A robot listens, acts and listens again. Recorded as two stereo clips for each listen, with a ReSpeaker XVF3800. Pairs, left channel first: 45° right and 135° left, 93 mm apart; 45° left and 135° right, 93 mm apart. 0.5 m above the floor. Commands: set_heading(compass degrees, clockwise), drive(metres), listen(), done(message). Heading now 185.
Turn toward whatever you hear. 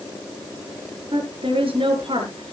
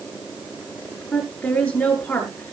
set_heading(65)
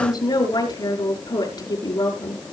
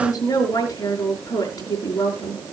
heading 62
done("Facing the woman speaking, over 4 m away.")